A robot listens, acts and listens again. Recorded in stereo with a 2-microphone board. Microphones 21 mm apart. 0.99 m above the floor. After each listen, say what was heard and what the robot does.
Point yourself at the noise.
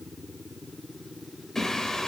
The singing: about 35° left or 145° left. Turn 35° left.
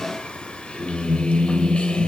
So it is at 95° left. Turn 95° left.
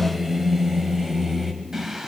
The singing is now 30° right. Turn 30° right.
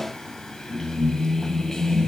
The singing is now 20° left. Turn 20° left.
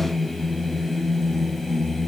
Facing the singing.